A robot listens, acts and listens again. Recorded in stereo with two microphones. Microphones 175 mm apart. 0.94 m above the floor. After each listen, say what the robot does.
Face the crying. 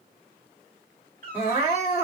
Turn 30° right.
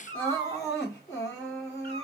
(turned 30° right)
Turn 20° left.
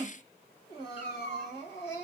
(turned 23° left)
Facing the crying.